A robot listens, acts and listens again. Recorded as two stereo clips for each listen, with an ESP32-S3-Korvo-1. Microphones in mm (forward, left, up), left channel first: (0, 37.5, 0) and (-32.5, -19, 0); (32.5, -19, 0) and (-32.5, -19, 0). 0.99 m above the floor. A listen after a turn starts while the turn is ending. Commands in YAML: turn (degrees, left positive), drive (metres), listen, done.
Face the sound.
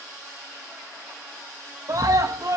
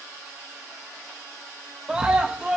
turn: -105
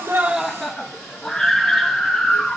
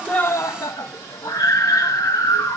turn: -25
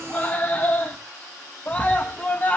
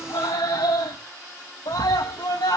done: "Facing the scream, under 1 m away."